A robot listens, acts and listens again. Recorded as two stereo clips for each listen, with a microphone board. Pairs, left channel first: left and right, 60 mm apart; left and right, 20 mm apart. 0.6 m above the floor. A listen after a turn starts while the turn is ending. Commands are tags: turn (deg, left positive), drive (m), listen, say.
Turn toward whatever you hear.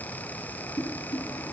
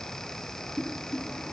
<turn deg="90"/>
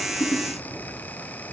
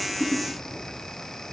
<listen/>
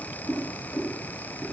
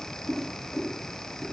<say>Found it: boiling, straight ahead.</say>